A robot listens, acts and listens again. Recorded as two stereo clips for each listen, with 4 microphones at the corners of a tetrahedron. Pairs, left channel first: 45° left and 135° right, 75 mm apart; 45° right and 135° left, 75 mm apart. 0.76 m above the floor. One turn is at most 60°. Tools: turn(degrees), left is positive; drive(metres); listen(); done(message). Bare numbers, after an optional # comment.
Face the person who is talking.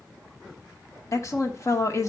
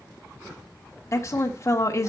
done("Facing the woman speaking, 1 to 2 m away.")